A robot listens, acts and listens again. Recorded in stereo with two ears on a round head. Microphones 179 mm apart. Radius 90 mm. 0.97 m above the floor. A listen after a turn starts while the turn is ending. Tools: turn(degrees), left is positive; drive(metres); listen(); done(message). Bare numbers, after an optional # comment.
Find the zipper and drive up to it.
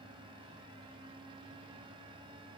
listen()
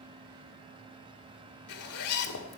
turn(90)
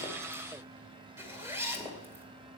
# So it is at 10° right.
turn(-10)
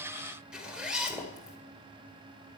drive(1.0)
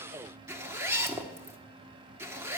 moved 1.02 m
# The zipper is now 15° right.
turn(-15)
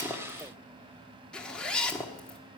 drive(1.0)
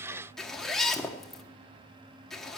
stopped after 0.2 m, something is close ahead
done("Arrived at the zipper, straight ahead.")